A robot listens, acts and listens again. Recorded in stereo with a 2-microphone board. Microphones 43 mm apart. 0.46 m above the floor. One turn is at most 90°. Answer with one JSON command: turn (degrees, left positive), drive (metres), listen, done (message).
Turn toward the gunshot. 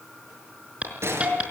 {"turn": -90}
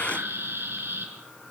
{"done": "I heard a gunshot from this way, but can't make it out now."}